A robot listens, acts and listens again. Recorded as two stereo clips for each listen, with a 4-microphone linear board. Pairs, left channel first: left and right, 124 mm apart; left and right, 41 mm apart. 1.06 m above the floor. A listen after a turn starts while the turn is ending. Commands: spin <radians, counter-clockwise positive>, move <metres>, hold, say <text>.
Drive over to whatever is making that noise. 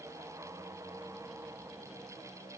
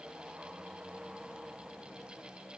hold
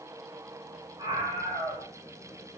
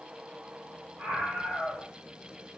spin -0.61
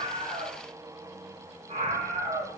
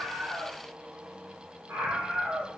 spin -1.92
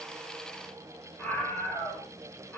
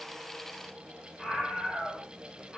spin 0.17
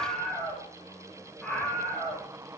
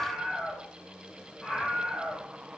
move 1.0
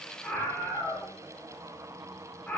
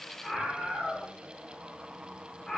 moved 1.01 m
spin 0.17
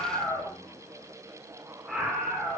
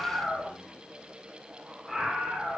move 1.0
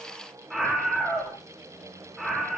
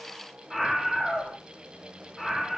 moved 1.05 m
move 1.0
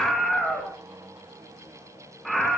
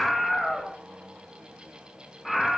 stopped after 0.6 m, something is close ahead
say I am next to the scream.